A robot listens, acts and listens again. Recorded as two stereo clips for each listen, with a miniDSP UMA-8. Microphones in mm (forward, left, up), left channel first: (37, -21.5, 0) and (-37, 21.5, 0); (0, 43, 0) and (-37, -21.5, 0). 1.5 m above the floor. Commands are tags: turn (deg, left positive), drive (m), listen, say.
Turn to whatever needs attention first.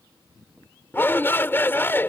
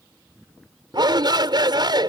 <turn deg="-95"/>
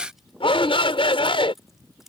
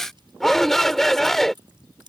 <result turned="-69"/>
<turn deg="-25"/>
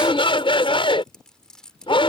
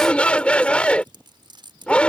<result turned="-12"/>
<turn deg="-15"/>
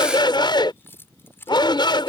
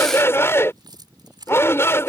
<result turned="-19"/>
<say>Found it: a shout, straight ahead.</say>